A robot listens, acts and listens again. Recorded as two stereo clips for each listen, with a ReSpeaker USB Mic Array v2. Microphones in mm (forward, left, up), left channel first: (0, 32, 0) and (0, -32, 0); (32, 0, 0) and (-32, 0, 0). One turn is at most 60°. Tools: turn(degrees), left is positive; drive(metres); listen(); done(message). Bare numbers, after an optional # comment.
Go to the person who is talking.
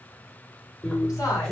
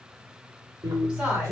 # The woman speaking: 110° left.
turn(60)
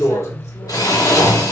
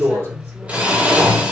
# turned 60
# Nothing new. It was at 50° left.
turn(50)
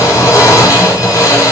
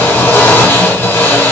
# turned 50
listen()
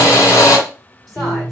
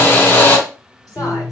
done("I heard a woman speaking from this way, but can't make it out now. I did not reach it.")